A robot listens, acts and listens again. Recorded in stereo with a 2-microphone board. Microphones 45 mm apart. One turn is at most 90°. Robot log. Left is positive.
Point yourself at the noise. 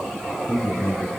cmd yaw +90
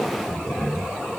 end: Found it: a man speaking, straight ahead, over 4 m away.